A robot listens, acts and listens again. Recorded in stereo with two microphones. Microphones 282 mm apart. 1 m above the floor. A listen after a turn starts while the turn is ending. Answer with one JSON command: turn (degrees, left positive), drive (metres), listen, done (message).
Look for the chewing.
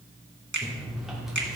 {"turn": 30}
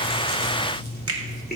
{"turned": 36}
{"turn": 145}
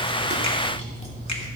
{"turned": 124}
{"turn": 25}
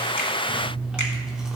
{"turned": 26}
{"done": "Found it: chewing, straight ahead."}